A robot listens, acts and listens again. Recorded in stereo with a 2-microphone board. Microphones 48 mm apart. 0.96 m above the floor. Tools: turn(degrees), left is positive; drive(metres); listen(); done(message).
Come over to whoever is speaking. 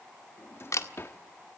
listen()
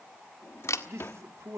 turn(degrees=-65)
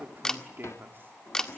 turn(degrees=-45)
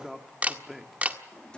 drive(metres=1.0)
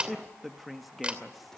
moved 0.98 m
drive(metres=1.0)
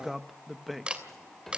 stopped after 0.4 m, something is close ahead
done("Arrived at the man speaking, straight ahead.")